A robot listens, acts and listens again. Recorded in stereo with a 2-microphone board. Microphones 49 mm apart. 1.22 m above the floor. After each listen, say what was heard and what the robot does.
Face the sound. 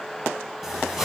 Turn 30° right.
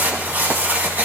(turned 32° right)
So it is at 140° right. Turn 140° right.
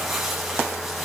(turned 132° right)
Facing the crumpling.